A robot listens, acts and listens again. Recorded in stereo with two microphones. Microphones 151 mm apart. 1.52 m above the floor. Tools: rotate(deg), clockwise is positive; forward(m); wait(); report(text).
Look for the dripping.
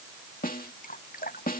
rotate(-70)
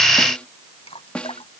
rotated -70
rotate(-40)
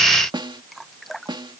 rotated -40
report("Facing the dripping.")